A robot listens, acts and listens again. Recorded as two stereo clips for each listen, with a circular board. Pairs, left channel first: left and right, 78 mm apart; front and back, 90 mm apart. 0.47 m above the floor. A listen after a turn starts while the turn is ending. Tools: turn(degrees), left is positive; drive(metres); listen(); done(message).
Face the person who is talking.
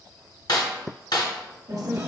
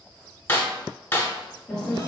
turn(degrees=-80)
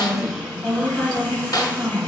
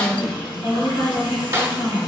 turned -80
turn(degrees=-20)
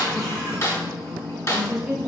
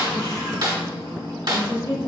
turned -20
done("Found it: a woman speaking, straight ahead, 1 to 2 m away.")